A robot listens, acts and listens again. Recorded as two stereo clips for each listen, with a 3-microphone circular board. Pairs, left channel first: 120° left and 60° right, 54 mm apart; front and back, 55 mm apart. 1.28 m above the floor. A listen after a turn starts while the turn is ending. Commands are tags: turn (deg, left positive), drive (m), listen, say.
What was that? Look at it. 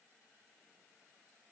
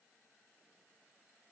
<listen/>
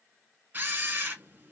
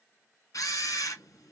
<say>Facing the camera shutter.</say>